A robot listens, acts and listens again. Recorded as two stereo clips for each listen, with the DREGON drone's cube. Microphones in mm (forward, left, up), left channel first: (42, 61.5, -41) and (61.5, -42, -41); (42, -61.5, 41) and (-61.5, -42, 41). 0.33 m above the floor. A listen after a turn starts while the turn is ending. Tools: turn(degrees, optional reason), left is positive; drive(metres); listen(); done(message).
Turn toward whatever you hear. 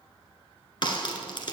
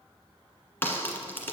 turn(degrees=60, reason="The crack: 60° left.")
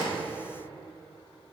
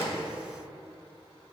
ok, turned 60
done("Facing where the crack came from. I can't hear it now.")